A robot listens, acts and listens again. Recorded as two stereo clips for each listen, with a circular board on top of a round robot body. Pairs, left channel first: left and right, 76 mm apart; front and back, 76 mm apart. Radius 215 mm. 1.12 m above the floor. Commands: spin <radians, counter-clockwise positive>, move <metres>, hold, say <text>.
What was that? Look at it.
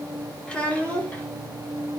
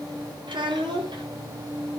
spin 2.88
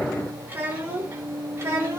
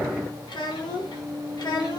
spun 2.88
spin -0.52
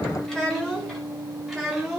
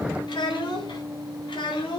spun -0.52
say Found it: a child speaking, straight ahead.